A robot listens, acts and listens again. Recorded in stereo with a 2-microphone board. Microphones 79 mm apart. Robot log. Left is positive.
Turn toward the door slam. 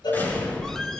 note: The door slam: about 25° left or 155° left.
cmd yaw +25
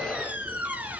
cmd idle
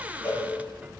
end: I heard a door slam, but can't make it out now. It was about straight ahead or 130° left.